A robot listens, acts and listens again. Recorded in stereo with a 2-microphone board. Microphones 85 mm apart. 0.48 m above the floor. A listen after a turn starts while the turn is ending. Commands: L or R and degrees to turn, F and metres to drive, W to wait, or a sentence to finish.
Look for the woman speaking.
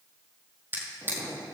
W
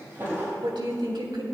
R75
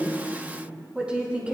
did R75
R15
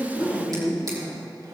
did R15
Facing the woman speaking.